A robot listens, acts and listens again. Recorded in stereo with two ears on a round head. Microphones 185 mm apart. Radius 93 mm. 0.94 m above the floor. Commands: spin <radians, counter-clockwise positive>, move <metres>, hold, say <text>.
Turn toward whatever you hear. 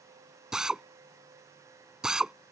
spin -0.52
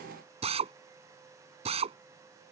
spin -2.53
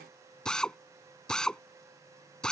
say Facing the drill.